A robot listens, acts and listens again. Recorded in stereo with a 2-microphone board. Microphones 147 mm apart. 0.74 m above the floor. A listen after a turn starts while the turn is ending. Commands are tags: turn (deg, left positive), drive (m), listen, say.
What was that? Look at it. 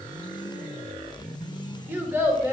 <turn deg="-20"/>
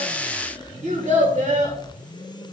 <turn deg="-125"/>
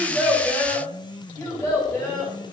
<turn deg="15"/>
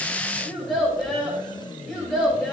<say>Found it: a child speaking, straight ahead, 2 to 4 m away.</say>